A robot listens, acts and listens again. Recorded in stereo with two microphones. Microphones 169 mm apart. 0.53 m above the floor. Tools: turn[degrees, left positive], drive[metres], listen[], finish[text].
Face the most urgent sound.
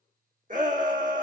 Thought: The shout: about 50° right or 130° right.
Action: turn[-50]
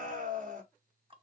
Thought: So it is at 65° right.
Action: turn[-65]
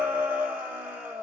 Thought: The shout is now 10° right.
Action: turn[-10]
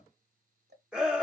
Action: finish[Found it: a shout, straight ahead.]